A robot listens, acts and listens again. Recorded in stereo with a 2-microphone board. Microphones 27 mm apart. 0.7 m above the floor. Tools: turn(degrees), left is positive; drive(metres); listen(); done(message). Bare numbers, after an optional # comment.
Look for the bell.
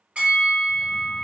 # The bell: about 55° right or 125° right.
turn(-55)
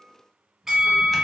# So it is at 25° right.
turn(-25)
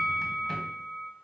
# The bell is now 20° right.
turn(-20)
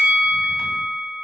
done("Facing the bell, 1 to 2 m away.")